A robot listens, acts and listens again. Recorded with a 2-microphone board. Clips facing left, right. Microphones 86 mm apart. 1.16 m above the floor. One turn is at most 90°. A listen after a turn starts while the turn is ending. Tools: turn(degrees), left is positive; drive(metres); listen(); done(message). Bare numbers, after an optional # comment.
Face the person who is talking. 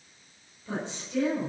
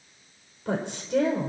# The woman speaking: about 65° right or 115° right.
turn(-65)
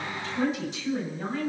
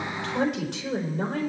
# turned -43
# So it is at 70° right.
turn(-70)
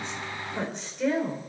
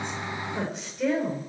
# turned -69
done("Found it: a woman speaking, straight ahead, over 4 m away.")